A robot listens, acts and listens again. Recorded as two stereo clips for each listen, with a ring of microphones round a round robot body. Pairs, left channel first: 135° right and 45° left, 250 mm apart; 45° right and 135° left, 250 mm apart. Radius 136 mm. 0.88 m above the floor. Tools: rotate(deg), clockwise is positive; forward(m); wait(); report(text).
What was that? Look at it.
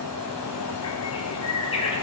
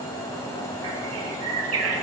rotate(-155)
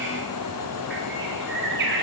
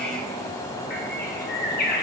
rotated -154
report("Found it: a bird, straight ahead, 1 to 2 m away.")